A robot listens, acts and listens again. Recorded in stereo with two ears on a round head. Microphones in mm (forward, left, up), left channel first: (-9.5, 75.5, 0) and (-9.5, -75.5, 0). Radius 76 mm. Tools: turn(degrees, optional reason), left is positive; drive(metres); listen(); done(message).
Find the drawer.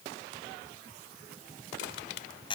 listen()
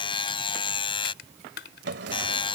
turn(degrees=-75, reason="The drawer: about 75° right or 105° right.")
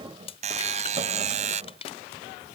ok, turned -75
turn(degrees=-30, reason="So it is at 30° right.")
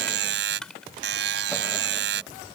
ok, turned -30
listen()
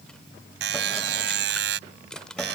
listen()
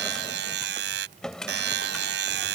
done("Facing the drawer.")